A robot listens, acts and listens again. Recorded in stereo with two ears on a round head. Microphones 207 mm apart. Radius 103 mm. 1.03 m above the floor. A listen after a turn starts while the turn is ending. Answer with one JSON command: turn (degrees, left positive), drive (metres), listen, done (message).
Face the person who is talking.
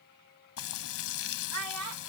{"turn": -90}
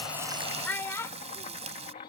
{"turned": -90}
{"turn": 10}
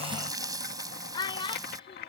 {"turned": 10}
{"turn": 20}
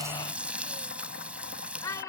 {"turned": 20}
{"turn": 15}
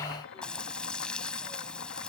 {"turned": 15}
{"listen": true}
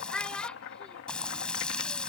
{"done": "Facing the child speaking."}